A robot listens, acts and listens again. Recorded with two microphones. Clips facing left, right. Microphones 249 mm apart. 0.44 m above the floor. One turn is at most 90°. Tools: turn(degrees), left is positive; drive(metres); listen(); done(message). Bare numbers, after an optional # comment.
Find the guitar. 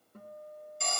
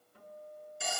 # The guitar: about 45° left or 135° left.
turn(45)
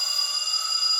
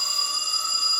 listen()
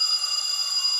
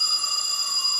listen()
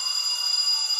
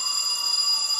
done("I heard a guitar, but can't make it out now. It was about straight ahead or 90° left.")